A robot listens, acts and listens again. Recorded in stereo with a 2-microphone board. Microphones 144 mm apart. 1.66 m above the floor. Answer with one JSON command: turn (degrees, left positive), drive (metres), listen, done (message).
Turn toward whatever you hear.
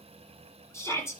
{"turn": 20}
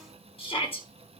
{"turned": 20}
{"turn": 140}
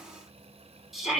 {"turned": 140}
{"done": "Found it: a shout, straight ahead."}